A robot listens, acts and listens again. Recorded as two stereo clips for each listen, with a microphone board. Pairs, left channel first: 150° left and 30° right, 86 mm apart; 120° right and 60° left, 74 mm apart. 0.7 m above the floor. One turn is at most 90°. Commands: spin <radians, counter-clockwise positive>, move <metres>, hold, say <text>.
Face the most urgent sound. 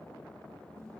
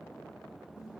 hold
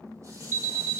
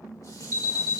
spin 0.44
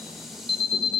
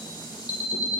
spin -0.17
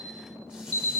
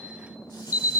say Found it: an alarm, straight ahead, 1 to 2 m away.